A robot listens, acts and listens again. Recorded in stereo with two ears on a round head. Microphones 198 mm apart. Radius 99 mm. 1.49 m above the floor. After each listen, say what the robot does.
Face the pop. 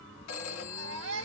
Keep listening.
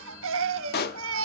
Turn 45° left.
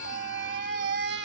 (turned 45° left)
Keep listening.
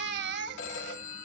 I heard a pop, but can't make it out now. It was about straight ahead or 90° left.